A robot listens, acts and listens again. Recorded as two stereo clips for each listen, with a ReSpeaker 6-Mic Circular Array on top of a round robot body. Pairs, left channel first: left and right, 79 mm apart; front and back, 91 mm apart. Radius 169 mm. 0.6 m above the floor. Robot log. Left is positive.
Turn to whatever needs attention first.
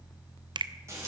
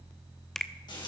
cmd idle
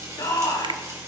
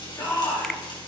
note: The shout: 60° left.
cmd yaw +60
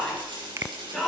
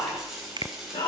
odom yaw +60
end: Found it: a shout, straight ahead, over 4 m away.